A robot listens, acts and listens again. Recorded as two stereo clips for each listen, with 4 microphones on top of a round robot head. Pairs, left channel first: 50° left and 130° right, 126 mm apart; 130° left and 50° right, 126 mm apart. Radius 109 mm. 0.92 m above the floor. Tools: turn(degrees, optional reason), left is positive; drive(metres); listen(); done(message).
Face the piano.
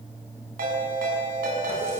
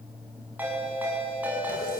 listen()
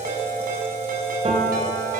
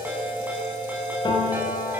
turn(degrees=-175, reason="The piano: 175° right.")
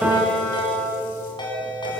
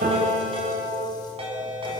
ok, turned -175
turn(degrees=-50, reason="The piano is now 50° right.")
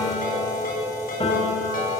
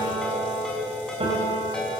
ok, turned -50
done("Facing the piano, over 4 m away.")